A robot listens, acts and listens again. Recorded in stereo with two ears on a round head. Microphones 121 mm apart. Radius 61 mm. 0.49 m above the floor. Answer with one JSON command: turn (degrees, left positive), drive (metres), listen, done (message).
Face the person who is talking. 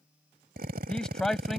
{"turn": 30}
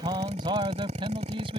{"turn": -40}
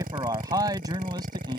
{"turn": -30}
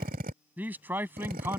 {"turn": -15}
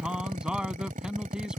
{"done": "Found it: a man speaking, straight ahead."}